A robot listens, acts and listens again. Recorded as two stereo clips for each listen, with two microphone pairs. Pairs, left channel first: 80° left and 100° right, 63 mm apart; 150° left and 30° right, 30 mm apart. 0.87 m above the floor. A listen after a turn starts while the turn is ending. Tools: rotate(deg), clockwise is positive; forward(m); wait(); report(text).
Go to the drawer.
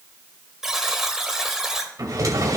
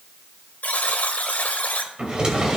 rotate(85)
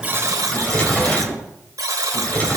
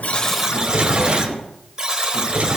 rotate(-15)
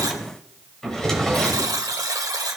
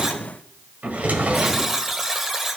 forward(1.0)
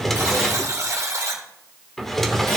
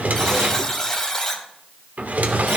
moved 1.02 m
rotate(10)
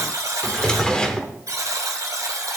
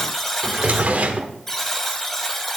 forward(1.0)
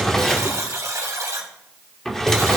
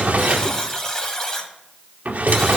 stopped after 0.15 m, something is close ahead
report("Arrived at the drawer, straight ahead.")